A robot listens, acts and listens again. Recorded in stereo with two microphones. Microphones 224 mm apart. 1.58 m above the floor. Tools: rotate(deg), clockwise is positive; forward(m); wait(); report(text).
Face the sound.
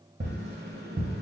rotate(50)
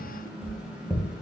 report("Found it: tapping, straight ahead.")